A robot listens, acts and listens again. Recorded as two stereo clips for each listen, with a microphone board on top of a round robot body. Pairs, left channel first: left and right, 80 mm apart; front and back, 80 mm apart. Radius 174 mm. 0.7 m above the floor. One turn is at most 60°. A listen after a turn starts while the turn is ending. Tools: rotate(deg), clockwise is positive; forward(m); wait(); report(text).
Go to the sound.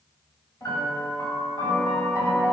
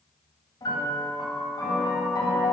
rotate(-40)
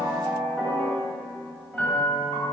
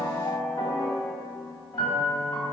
rotate(-20)
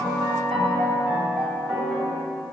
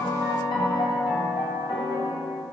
forward(1.0)
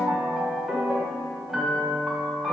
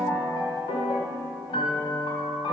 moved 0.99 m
forward(1.0)
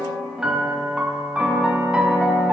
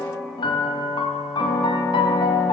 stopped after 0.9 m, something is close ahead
rotate(10)
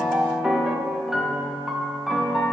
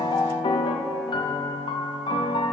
report("I am next to the piano.")